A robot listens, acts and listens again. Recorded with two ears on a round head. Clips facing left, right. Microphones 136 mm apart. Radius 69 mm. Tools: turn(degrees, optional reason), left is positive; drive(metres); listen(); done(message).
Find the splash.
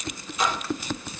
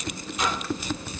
turn(degrees=90)
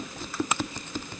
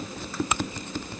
done("I heard a splash from this way, but can't make it out now.")